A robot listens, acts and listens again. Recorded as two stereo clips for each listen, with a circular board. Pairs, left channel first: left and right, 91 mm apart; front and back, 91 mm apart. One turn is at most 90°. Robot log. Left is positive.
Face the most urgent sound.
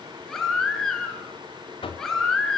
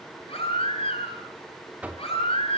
end: Found it: a baby crying, straight ahead, over 4 m away.